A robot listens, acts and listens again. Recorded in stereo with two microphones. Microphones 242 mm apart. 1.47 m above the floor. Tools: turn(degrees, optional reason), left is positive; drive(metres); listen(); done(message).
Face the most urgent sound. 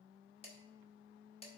listen()
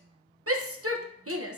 turn(degrees=-65, reason="The shout: about 65° right or 115° right.")
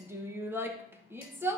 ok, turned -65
turn(degrees=-10, reason="So it is at 10° right.")
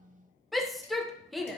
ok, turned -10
done("Facing the shout.")